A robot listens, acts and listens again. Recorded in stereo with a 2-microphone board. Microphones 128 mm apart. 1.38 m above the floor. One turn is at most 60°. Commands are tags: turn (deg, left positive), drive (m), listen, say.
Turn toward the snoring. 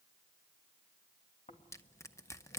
<turn deg="60"/>
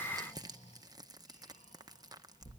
<turn deg="60"/>
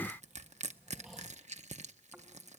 <say>Found it: snoring, straight ahead, 2 to 4 m away.</say>